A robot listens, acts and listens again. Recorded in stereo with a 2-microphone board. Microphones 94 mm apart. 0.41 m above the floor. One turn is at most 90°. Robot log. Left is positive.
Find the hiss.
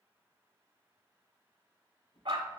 cmd idle
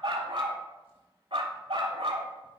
cmd idle
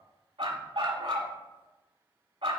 end: I can't make out a hiss, only a dog barking and a drawer.